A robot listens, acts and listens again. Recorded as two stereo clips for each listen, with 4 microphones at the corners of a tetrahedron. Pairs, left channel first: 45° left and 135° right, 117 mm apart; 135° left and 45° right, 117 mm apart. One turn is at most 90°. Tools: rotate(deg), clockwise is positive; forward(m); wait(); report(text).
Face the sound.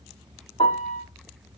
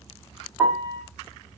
rotate(-30)
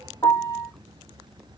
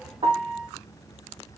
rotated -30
rotate(15)
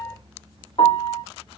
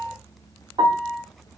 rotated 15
report("Found it: a piano, straight ahead, 2 to 4 m away.")